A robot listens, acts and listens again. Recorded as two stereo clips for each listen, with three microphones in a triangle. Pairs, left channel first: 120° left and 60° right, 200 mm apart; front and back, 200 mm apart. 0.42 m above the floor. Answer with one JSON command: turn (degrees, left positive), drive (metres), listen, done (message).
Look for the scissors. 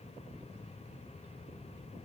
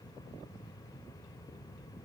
{"listen": true}
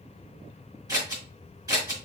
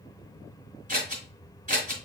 {"turn": -130}
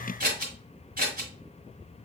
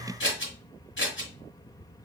{"turn": -15}
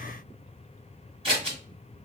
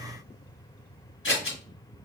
{"done": "Facing the scissors."}